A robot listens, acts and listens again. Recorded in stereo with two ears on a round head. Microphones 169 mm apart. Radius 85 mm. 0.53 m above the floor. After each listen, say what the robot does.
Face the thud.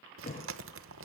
Turn 40° left.
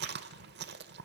Keep listening.
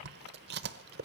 I heard a thud, but can't make it out now. It was about straight ahead or 100° left.